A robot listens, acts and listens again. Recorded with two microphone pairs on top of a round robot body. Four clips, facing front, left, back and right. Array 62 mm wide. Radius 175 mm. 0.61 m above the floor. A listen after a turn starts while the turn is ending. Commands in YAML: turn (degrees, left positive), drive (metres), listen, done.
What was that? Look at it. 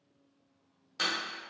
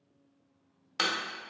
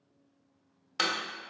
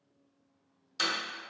turn: 140
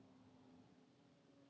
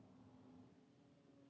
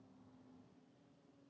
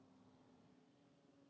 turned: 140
done: "I heard a door slam from this way, but can't make it out now."